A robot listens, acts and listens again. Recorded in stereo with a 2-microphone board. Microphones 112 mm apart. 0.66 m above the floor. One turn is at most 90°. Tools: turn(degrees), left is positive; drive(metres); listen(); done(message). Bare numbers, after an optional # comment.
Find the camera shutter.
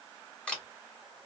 turn(30)
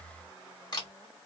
# So it is at 135° left.
turn(90)
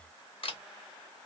# The camera shutter is now 65° left.
turn(65)
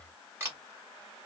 # The camera shutter is now 25° right.
turn(-25)
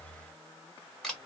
done("Found it: a camera shutter, straight ahead, 1 to 2 m away.")